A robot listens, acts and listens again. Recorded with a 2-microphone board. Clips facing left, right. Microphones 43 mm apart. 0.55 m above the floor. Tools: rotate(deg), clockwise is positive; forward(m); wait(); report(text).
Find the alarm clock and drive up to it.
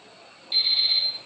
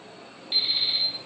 rotate(25)
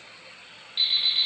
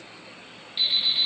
forward(1.0)
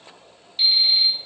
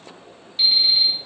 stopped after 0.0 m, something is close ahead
report("Something is in my way. I am facing the alarm clock but have not reached it.")